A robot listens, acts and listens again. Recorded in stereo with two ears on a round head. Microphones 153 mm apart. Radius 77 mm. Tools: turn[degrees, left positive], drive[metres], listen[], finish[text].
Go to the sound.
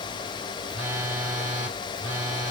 Thought: The phone buzzing: about 15° right or 165° right.
Action: turn[-15]
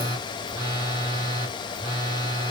Thought: So it is at 150° right.
Action: turn[-150]
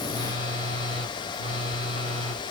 Thought: The phone buzzing is now 35° right.
Action: turn[-35]
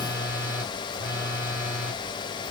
Thought: The phone buzzing is now 10° right.
Action: turn[-10]
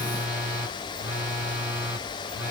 Action: drive[1.0]
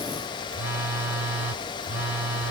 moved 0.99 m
Thought: The phone buzzing is now 10° right.
Action: turn[-10]
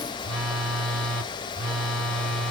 Action: drive[1.0]
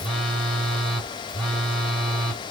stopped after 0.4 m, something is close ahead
Action: finish[Arrived at the phone buzzing, straight ahead.]